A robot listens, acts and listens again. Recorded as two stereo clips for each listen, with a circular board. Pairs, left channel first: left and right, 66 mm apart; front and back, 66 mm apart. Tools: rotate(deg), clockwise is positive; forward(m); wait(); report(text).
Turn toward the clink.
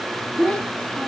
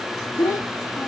wait()
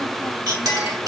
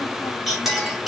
rotate(95)
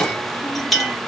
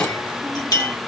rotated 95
report("Facing the clink, 1 to 2 m away.")